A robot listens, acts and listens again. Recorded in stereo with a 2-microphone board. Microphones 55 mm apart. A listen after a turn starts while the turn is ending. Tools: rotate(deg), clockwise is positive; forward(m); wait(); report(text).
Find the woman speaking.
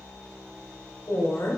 rotate(-55)
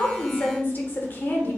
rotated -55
rotate(-40)
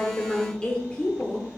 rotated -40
rotate(-30)
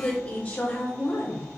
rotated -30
rotate(-40)
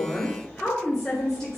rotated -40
rotate(-10)
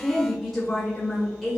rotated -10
report("Found it: a woman speaking, straight ahead, 1 to 2 m away.")